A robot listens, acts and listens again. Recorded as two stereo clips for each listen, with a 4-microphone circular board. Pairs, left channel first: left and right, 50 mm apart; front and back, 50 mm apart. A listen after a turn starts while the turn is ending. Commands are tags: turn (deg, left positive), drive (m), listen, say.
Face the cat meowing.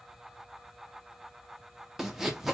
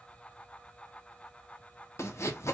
<listen/>
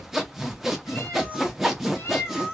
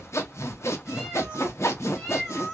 <turn deg="80"/>
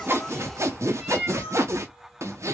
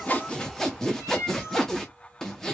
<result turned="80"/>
<turn deg="-15"/>
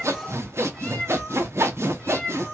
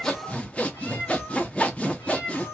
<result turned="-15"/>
<say>Found it: a cat meowing, straight ahead.</say>